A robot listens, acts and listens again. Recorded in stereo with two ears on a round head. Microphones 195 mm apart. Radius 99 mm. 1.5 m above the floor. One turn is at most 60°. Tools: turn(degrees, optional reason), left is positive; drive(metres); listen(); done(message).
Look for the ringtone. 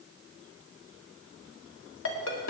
turn(degrees=60, reason="The ringtone: about 60° left or 120° left.")
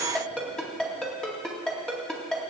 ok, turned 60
done("Facing the ringtone.")